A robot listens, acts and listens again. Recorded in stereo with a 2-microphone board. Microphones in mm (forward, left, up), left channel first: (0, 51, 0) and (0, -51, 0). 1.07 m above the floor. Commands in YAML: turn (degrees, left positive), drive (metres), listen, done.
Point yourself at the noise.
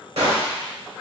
turn: -90
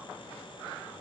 done: "Facing where the gunshot came from. I can't hear it now."